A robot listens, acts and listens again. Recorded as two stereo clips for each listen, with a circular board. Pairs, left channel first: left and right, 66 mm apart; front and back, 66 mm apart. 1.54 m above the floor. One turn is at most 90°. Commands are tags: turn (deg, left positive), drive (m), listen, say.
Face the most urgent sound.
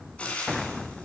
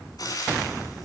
<listen/>
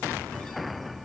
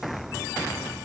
<listen/>
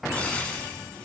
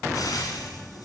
<say>I can't make out anything urgent, only frying.</say>